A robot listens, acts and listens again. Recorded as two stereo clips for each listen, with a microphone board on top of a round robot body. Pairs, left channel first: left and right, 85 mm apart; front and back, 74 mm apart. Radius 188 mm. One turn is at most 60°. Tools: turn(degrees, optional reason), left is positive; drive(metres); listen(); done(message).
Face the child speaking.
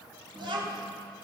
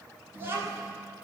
turn(degrees=-60, reason="The child speaking: 120° right.")
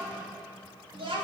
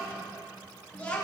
turn(degrees=-60, reason="The child speaking is now 75° right.")
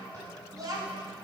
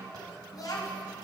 turn(degrees=-40, reason="The child speaking is now 40° right.")
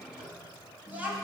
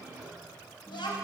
turn(degrees=-15, reason="The child speaking is now 15° right.")
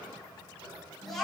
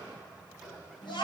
done("Found it: a child speaking, straight ahead.")